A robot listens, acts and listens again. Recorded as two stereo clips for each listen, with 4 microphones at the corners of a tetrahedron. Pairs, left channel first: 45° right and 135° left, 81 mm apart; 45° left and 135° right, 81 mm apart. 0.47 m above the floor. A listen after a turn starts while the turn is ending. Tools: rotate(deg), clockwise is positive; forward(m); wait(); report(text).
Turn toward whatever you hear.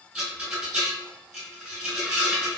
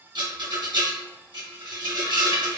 rotate(145)
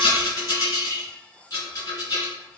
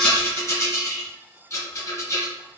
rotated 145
report("Facing the rattle.")